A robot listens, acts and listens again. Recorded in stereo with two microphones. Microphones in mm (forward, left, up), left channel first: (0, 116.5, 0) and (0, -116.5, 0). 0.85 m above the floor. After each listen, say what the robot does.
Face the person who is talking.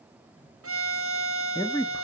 Turn 15° left.
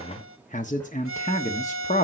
Turn 150° left.
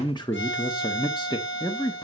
Turn 20° left.
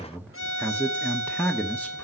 Found it: a man speaking, straight ahead, 1 to 2 m away.